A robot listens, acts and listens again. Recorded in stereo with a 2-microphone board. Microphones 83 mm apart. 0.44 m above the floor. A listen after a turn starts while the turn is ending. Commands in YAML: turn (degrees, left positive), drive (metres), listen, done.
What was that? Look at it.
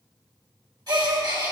turn: -55
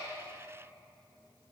listen: true
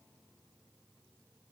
done: "I heard a gasp, but can't make it out now. It was about straight ahead or 70° right."